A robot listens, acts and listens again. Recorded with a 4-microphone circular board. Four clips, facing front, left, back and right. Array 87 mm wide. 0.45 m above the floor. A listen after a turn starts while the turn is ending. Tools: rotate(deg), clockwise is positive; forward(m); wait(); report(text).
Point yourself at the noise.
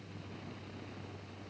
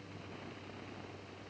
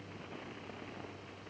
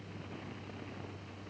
wait()
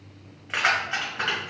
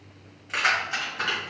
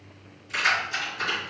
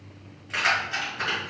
rotate(-15)
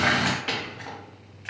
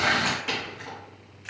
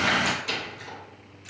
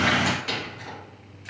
report("Found it: keys jangling, straight ahead, 2 to 4 m away.")